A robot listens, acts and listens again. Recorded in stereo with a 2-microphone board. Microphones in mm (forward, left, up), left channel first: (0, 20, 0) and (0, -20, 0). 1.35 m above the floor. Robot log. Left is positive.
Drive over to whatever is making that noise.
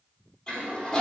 note: The toilet flushing: about 20° left or 160° left.
cmd yaw +20
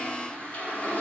note: So it is at 140° left.
cmd yaw +140
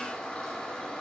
note: The toilet flushing is now 15° left.
cmd yaw +15
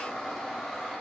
cmd fwd 1.0
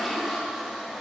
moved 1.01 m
cmd fwd 1.0
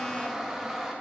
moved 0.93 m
note: The toilet flushing is now 10° right.
cmd yaw -10
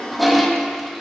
cmd fwd 1.0
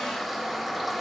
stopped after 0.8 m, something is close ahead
end: Arrived at the toilet flushing, straight ahead.